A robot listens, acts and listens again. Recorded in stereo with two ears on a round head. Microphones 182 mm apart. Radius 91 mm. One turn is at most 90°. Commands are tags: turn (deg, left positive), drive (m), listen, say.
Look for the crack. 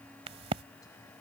<turn deg="-30"/>
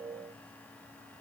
<listen/>
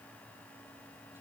<say>I heard a crack, but can't make it out now. It was about straight ahead or 120° right.</say>